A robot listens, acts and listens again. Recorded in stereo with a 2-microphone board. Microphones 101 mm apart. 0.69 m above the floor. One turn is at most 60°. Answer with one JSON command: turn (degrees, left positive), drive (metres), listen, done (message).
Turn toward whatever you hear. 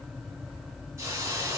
{"turn": -25}
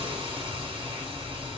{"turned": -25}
{"turn": -60}
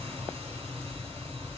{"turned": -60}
{"turn": -60}
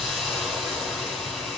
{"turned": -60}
{"done": "Found it: a hiss, straight ahead."}